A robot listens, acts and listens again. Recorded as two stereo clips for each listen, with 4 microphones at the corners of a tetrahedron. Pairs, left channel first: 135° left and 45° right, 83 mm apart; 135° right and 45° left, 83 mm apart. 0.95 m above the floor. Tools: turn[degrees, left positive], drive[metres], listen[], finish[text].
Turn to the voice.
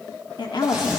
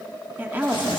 Thought: The woman speaking: 110° left.
Action: turn[110]
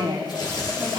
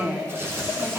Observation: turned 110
Thought: The woman speaking is now 20° right.
Action: turn[-20]
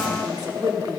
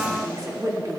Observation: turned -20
Action: finish[Facing the woman speaking.]